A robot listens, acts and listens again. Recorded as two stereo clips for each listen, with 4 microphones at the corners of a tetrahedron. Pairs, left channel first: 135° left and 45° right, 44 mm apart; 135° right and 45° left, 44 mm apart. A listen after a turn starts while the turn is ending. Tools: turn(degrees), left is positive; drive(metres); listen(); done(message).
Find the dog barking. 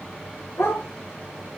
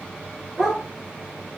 turn(degrees=135)
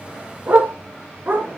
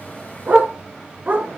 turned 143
done("Found it: a dog barking, straight ahead.")